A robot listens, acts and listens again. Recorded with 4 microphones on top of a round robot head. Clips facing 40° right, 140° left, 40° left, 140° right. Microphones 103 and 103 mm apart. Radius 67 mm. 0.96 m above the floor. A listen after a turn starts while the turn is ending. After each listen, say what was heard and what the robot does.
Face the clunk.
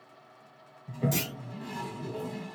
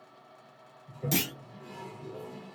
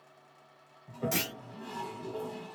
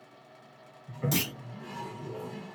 The clunk: 145° left. Turn 145° left.
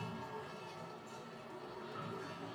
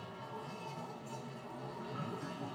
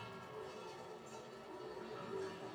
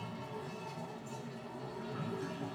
Facing where the clunk came from. I can't hear it now.